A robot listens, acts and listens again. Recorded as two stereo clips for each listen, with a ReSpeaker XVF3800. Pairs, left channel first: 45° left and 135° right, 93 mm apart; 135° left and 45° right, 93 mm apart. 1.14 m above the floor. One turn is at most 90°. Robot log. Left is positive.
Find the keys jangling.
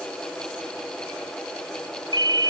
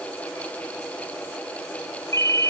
cmd idle
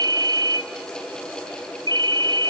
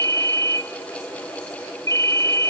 cmd idle
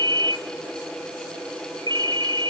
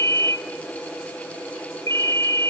end: I can't make out keys jangling, only a ringtone.